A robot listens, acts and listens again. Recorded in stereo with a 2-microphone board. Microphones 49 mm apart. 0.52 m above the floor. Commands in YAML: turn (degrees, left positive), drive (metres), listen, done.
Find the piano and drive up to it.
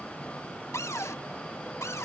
listen: true
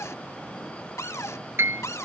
turn: -55
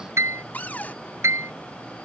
turn: -70
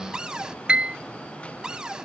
turn: -20
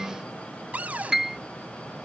drive: 1.0
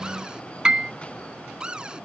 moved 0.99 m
turn: -15
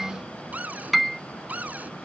drive: 1.0
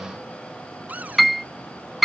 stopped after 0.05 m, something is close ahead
done: "Arrived at the piano, straight ahead."